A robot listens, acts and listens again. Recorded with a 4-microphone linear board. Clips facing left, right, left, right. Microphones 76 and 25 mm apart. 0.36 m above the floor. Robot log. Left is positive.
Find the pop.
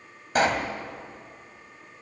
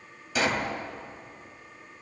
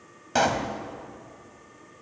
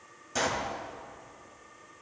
note: The pop: about 50° left or 130° left.
cmd yaw +50
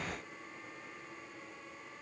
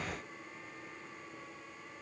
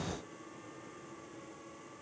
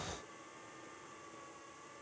cmd idle
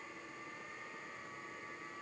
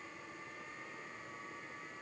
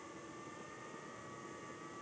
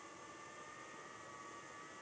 end: I heard a pop, but can't make it out now. It was about straight ahead or 80° left.